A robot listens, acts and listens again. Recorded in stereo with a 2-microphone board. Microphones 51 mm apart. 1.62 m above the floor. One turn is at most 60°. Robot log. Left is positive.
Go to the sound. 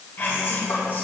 note: The whispering: about 40° left or 140° left.
cmd yaw +40
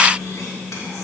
note: So it is at 100° left.
cmd yaw +60
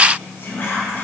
note: The whispering is now 40° left.
cmd yaw +40
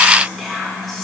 cmd fwd 1.0
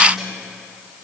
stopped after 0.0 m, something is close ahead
end: Blocked. The whispering is further on, straight ahead.